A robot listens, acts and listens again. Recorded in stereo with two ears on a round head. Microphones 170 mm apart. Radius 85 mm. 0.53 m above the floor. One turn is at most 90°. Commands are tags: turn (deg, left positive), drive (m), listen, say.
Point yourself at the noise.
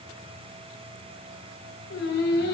<turn deg="60"/>
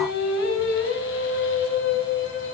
<turn deg="70"/>
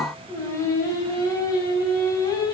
<turn deg="20"/>
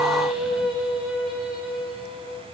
<say>Found it: singing, straight ahead, 2 to 4 m away.</say>